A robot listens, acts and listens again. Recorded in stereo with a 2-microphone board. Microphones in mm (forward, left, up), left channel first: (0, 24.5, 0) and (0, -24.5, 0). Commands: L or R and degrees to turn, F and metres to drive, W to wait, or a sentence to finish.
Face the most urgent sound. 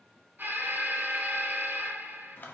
R40
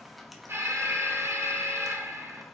R95
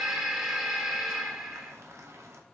R10
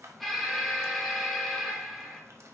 Facing the alarm.